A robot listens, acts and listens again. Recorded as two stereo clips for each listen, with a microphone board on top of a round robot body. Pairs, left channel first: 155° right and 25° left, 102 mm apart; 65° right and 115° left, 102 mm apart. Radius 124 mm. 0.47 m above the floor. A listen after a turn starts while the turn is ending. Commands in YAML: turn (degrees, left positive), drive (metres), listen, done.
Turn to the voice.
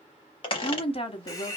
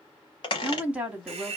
turn: -170
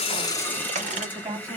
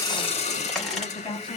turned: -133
turn: -40
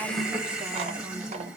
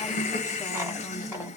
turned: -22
turn: -15
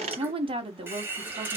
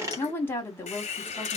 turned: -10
done: "Found it: a woman speaking, straight ahead."